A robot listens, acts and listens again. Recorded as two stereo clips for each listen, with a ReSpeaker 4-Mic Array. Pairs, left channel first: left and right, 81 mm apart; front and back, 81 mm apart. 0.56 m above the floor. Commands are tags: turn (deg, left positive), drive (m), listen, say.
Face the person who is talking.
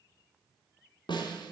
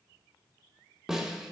<listen/>
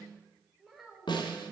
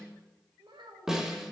<turn deg="180"/>
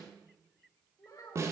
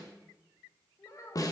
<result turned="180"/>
<turn deg="45"/>
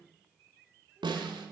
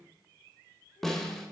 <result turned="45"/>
<listen/>
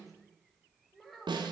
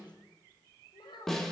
<say>Facing the child speaking, 2 to 4 m away.</say>